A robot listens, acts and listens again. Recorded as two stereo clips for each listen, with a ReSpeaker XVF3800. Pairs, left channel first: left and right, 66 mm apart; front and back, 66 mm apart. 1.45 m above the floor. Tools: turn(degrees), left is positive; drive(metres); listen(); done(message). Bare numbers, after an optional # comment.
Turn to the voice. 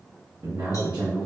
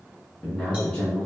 # The man speaking: 75° right.
turn(-75)
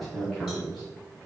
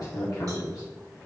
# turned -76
done("Found it: a man speaking, straight ahead, 1 to 2 m away.")